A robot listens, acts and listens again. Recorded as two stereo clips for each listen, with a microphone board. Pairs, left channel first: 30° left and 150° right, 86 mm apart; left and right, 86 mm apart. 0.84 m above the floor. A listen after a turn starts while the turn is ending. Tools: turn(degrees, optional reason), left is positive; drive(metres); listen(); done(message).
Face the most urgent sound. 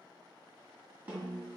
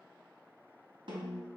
listen()
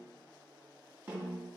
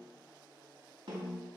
listen()
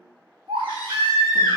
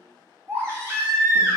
turn(degrees=-145, reason="The baby crying: 145° right.")
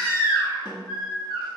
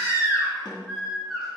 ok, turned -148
done("Facing the baby crying, 1 to 2 m away.")